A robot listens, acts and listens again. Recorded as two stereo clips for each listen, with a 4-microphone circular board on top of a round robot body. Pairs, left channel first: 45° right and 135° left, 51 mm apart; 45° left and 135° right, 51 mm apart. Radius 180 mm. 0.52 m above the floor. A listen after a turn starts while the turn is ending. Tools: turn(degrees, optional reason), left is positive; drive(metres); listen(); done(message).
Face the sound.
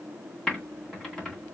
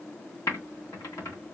turn(degrees=40, reason="The typing on a keyboard: 40° left.")
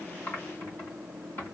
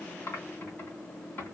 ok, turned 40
done("Found it: typing on a keyboard, straight ahead.")